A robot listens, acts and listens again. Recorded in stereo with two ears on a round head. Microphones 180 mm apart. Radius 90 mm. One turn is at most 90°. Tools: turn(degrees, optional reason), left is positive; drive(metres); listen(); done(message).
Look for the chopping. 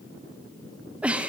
listen()
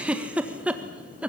listen()
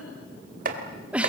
turn(degrees=-45, reason="The chopping: about 45° right or 135° right.")
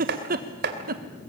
turn(degrees=-75, reason="So it is at 75° right.")
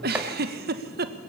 listen()
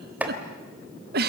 turn(degrees=-10, reason="The chopping is now 10° right.")
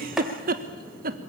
listen()
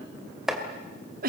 done("Found it: chopping, straight ahead, 2 to 4 m away.")